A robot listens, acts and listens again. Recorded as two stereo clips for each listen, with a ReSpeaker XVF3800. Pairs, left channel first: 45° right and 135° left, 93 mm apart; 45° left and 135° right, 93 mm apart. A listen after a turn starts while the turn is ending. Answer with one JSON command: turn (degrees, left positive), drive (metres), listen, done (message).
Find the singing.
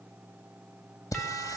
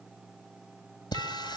{"done": "Found it: singing, straight ahead, 2 to 4 m away."}